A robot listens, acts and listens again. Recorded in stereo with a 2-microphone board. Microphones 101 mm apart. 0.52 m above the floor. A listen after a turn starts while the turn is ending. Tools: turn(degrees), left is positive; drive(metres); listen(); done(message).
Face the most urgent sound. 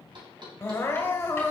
turn(degrees=25)
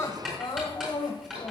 turn(degrees=130)
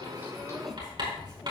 listen()
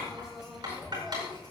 listen()
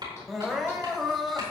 done("Found it: crying, straight ahead.")